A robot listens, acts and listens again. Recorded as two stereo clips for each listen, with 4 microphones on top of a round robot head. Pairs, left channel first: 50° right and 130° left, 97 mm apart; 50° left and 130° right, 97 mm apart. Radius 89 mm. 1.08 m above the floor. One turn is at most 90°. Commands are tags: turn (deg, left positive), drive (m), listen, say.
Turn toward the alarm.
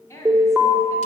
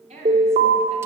<turn deg="-90"/>
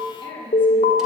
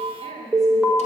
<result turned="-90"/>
<turn deg="-40"/>
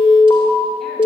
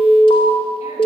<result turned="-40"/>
<say>Facing the alarm, 2 to 4 m away.</say>